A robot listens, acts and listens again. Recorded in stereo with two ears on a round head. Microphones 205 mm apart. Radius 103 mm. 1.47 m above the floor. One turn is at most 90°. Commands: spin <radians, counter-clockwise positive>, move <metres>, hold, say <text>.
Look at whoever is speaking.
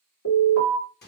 hold
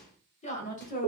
spin 0.61
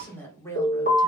spin 0.26
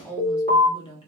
spin 0.44
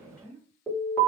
spin 0.17
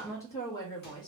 spin 0.35
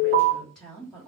say Found it: a woman speaking, straight ahead.